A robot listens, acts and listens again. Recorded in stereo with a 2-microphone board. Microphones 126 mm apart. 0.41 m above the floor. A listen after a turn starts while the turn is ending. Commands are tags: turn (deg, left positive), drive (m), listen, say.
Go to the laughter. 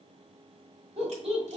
<turn deg="-50"/>
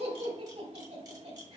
<turn deg="-70"/>
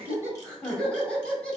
<turn deg="10"/>
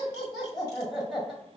<drive m="1.0"/>
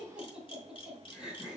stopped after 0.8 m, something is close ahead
<turn deg="-10"/>
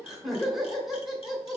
<say>I am next to the laughter.</say>